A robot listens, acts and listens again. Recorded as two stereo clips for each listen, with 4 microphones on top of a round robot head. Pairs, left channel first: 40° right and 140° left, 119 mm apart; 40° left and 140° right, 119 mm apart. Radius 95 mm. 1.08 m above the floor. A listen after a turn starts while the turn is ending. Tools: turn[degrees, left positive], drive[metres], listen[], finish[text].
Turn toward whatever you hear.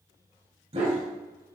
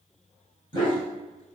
Thought: The dog barking: 95° left.
Action: turn[95]
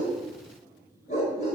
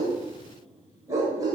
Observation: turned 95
Thought: The dog barking is now 80° right.
Action: turn[-80]
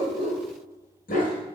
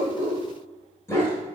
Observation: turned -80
Thought: The dog barking is now 30° right.
Action: turn[-30]
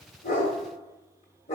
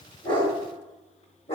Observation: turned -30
Action: finish[Found it: a dog barking, straight ahead, 1 to 2 m away.]